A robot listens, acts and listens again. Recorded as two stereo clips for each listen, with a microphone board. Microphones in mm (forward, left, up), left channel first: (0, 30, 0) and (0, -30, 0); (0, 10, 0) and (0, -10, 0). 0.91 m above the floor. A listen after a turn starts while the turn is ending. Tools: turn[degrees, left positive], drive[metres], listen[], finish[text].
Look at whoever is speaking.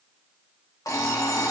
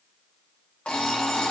Action: listen[]
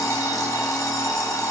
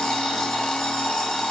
Action: listen[]
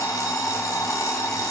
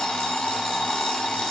Action: finish[I can't make out anyone speaking to turn to.]